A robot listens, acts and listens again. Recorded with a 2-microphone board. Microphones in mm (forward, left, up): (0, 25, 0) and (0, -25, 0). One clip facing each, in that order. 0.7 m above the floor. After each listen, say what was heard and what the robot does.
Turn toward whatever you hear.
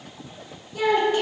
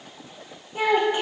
The child speaking: about 20° right or 160° right. Turn 20° right.
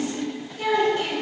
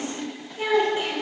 Turn 30° right.
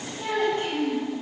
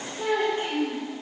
The child speaking: about 25° right or 155° right. Turn 25° right.
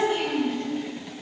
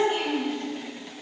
So it is at 140° right. Turn 140° right.
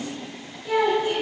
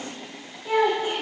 Facing the child speaking, 2 to 4 m away.